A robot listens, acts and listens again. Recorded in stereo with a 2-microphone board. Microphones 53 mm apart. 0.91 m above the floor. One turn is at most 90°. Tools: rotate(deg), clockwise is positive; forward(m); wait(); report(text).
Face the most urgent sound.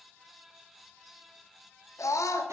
rotate(-90)
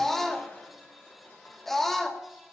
report("Found it: a scream, straight ahead.")